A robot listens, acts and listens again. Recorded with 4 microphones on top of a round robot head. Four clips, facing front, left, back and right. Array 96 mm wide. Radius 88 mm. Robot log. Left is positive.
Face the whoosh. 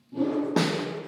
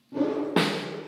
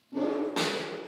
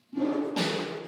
note: The whoosh: 105° left.
cmd yaw +105
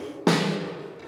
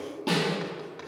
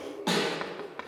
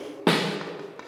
cmd idle
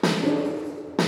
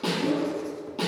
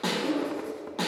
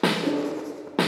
note: The whoosh is now 15° right.
cmd yaw -15
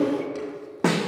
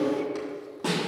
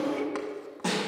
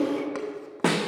end: Facing the whoosh, 1 to 2 m away.